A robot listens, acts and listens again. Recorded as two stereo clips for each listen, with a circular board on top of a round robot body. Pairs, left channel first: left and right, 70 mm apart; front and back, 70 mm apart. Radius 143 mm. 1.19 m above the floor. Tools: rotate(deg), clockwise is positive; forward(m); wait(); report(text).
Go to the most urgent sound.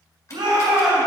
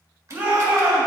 rotate(115)
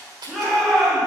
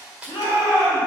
forward(1.0)
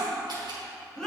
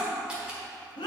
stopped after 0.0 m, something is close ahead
rotate(-10)
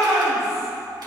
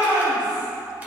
report("Blocked. The shout is further on, straight ahead.")